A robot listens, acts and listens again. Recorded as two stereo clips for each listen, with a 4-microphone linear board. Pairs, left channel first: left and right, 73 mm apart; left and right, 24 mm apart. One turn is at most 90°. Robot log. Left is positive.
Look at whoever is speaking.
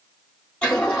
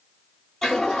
cmd idle
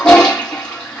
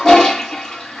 cmd idle
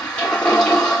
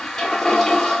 end: I can't make out anyone speaking, only a toilet flushing.